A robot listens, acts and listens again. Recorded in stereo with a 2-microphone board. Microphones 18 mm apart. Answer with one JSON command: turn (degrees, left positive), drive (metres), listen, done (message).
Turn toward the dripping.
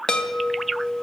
{"listen": true}
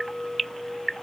{"listen": true}
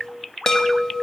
{"done": "I can't make out dripping to turn to."}